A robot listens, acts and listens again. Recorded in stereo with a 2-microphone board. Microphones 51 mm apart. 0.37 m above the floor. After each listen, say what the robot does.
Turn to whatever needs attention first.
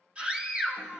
Turn 25° right.
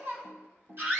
Turn 130° right.
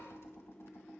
Keep listening.
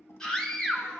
Turn 15° left.
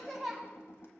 Facing the scream.